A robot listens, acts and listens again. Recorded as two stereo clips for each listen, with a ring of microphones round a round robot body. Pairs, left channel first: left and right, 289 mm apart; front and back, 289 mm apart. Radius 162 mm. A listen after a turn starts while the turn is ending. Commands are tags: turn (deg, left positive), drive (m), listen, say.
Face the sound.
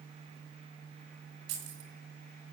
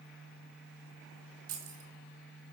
<turn deg="-130"/>
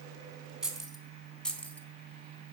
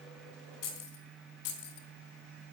<say>Facing the keys jangling, 2 to 4 m away.</say>